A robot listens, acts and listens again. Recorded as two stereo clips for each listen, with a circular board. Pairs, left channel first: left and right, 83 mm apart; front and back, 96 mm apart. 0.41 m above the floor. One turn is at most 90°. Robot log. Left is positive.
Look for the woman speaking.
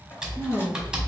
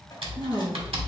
note: The woman speaking: 125° left.
cmd yaw +90
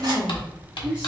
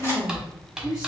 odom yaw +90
note: The woman speaking is now 25° right.
cmd yaw -25
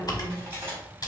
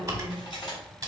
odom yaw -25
cmd idle
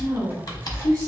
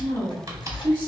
note: The woman speaking is now 40° right.
cmd yaw -40
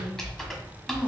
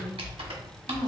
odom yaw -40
cmd idle
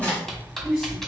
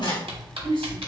end: Found it: a woman speaking, straight ahead, 1 to 2 m away.